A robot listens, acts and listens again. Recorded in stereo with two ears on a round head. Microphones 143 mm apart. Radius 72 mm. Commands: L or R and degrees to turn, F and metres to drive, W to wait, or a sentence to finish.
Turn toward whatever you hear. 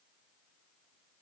W
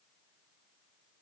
W
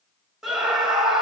R30
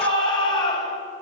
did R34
L30
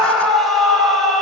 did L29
Found it: a scream, straight ahead, over 4 m away.